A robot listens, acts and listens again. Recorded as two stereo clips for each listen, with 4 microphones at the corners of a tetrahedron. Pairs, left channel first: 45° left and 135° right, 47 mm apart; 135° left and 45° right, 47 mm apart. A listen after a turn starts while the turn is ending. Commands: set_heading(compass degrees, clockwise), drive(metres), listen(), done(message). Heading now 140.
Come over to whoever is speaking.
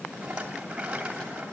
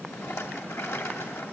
listen()
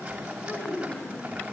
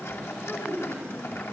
set_heading(55)
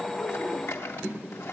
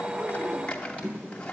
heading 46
set_heading(56)
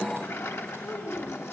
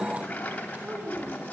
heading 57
drive(1.0)
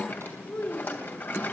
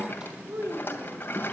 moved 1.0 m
drive(1.0)
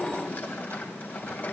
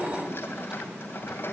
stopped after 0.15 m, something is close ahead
listen()
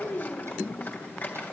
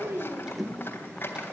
done("Blocked. The child speaking is further on, straight ahead.")